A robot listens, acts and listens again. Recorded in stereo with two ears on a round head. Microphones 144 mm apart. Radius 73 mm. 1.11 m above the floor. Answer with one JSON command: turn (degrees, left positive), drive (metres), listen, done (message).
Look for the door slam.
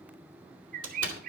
{"turn": -90}
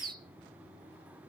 {"done": "I heard a door slam from this way, but can't make it out now."}